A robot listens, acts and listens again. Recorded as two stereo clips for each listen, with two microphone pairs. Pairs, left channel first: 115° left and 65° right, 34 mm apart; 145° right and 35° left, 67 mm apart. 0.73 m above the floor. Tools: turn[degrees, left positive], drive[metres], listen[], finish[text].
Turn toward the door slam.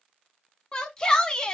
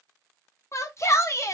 Action: listen[]
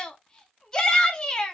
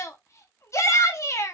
Action: listen[]
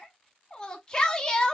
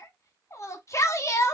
Action: finish[I can't make out a door slam, only a shout.]